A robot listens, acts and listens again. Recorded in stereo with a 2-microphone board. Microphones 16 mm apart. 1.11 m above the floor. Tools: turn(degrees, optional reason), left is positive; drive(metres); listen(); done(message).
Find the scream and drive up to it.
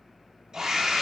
turn(degrees=-45, reason="The scream: about 45° right or 135° right.")
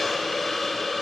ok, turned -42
listen()
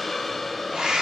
turn(degrees=-95, reason="So it is at 95° right.")
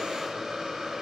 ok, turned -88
turn(degrees=-10, reason="Nothing new. It was at 10° right.")
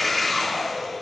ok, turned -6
drive(metres=1.0)
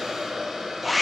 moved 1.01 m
turn(degrees=-10, reason="The scream is now 10° right.")
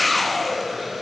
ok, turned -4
drive(metres=1.0)
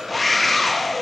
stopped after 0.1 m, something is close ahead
done("Arrived at the scream, straight ahead.")